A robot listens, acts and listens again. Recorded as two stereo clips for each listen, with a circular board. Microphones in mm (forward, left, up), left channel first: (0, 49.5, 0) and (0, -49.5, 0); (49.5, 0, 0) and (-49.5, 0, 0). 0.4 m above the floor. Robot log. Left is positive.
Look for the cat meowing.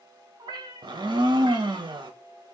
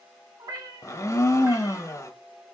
note: The cat meowing: 130° right.
cmd yaw -130
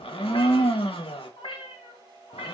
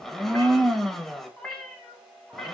note: The cat meowing is now 95° left.
cmd yaw +95
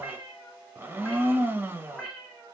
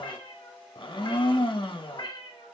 end: Facing the cat meowing.